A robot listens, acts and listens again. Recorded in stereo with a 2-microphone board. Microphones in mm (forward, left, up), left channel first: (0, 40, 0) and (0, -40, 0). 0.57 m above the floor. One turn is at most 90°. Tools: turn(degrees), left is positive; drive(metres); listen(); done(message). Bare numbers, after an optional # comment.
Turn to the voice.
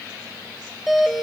listen()
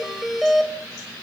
listen()
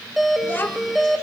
# The child speaking: about 25° left or 155° left.
turn(25)
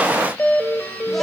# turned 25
listen()
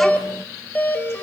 listen()
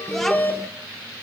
done("I heard a child speaking, but can't make it out now. It was about straight ahead or 130° left.")